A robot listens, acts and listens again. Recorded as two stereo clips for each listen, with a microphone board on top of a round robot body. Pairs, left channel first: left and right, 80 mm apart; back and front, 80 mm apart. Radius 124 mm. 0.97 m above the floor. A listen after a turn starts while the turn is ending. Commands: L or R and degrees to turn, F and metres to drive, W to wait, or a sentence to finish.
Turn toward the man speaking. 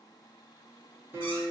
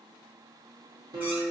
W
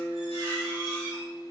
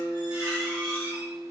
W
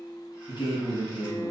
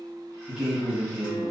L85
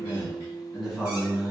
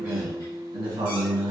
Found it: a man speaking, straight ahead, 1 to 2 m away.